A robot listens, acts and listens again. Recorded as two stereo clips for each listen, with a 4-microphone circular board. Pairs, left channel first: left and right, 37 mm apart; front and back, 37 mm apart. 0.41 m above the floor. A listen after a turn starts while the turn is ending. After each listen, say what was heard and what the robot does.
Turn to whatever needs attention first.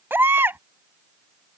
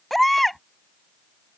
The baby crying: 85° right. Turn 85° right.
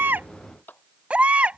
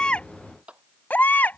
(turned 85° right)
The baby crying is now 35° right. Turn 35° right.
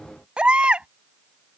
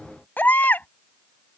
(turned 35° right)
The baby crying is now 30° right. Turn 30° right.
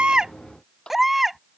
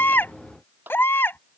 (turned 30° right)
Facing the baby crying.